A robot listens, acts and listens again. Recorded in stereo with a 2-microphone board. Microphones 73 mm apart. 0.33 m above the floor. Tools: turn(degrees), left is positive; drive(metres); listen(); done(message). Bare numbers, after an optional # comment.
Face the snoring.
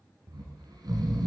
# The snoring: about 65° right or 115° right.
turn(-65)
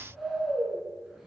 done("Found it: snoring, straight ahead.")